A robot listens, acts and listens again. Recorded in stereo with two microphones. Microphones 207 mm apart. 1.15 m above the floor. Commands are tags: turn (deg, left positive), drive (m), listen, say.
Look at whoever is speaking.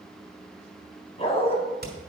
<listen/>
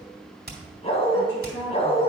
<turn deg="90"/>
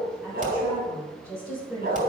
<turn deg="-15"/>
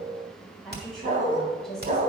<say>Found it: a woman speaking, straight ahead.</say>